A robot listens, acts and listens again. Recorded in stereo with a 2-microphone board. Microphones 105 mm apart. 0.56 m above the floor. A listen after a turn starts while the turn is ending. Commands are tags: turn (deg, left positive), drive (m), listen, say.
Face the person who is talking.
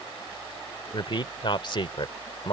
<turn deg="50"/>
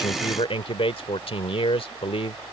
<turn deg="75"/>
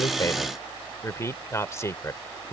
<turn deg="30"/>
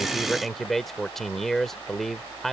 <say>Facing the man speaking.</say>